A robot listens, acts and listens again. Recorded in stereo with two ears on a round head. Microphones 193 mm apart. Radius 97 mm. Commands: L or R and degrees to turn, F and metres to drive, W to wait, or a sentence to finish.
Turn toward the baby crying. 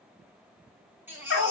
R30
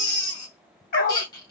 L20
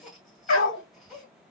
W
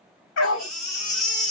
Facing the baby crying, 1 to 2 m away.